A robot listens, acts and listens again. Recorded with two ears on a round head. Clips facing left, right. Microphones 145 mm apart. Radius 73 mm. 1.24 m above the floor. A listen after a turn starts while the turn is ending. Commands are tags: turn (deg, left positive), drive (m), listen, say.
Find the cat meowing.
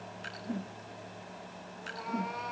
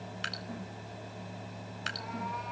<turn deg="65"/>
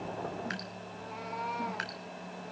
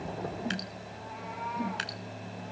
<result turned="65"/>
<turn deg="50"/>
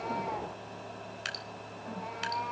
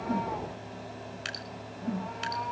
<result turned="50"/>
<turn deg="15"/>
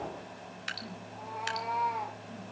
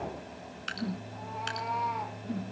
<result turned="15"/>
<say>Found it: a cat meowing, straight ahead.</say>